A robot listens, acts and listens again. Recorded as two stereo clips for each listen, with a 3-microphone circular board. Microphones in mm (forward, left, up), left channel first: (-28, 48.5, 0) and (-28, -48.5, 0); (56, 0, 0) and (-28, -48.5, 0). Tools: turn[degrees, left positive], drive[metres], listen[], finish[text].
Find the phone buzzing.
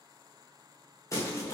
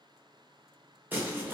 Action: listen[]
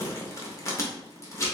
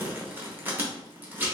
Action: listen[]
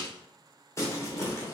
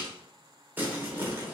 Action: finish[I can't make out a phone buzzing to turn to.]